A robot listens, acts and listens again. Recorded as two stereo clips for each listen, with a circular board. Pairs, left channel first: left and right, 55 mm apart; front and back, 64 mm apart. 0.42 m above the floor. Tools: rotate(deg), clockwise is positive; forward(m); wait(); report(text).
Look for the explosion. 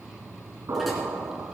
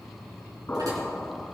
rotate(65)
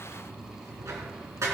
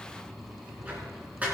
report("I heard an explosion from this way, but can't make it out now.")